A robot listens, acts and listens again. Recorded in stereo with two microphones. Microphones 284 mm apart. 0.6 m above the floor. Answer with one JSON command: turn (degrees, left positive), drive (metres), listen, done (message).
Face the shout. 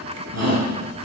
{"turn": -90}
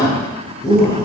{"turn": 15}
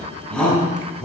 {"done": "Found it: a shout, straight ahead, over 4 m away."}